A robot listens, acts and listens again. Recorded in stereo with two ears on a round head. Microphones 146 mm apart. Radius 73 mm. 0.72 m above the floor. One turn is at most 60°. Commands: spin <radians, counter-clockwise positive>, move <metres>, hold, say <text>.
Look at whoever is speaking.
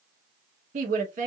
spin -0.87
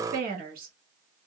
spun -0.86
spin -1.05
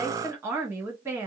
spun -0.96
spin -0.26
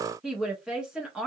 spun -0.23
say Found it: a woman speaking, straight ahead, 1 to 2 m away.